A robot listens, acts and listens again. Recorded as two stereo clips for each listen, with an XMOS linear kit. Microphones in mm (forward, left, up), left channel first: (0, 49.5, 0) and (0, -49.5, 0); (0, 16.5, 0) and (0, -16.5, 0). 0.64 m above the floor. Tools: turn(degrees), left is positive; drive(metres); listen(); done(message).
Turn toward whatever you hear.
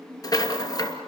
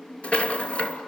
turn(degrees=40)
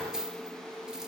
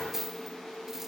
done("Found it: a rattle, straight ahead.")